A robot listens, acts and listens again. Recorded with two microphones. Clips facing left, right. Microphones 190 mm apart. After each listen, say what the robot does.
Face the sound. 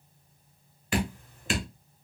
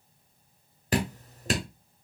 Turn 40° right.
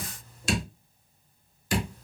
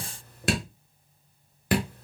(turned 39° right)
Turn 95° right.
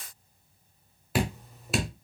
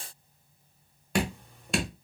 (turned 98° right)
Facing the dripping.